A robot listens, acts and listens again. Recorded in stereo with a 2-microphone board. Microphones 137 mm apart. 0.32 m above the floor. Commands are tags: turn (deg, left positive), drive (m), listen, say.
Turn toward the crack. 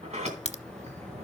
<turn deg="55"/>
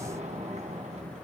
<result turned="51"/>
<listen/>
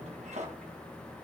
<say>I heard a crack, but can't make it out now. It was about 5° left or 75° left.</say>